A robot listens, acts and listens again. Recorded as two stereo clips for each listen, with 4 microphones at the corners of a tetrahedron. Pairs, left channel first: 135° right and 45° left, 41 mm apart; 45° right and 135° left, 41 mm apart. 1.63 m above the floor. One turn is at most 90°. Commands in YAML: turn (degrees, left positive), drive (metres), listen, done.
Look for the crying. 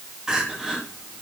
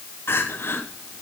turn: -30
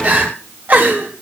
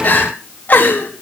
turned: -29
done: "Found it: crying, straight ahead, 2 to 4 m away."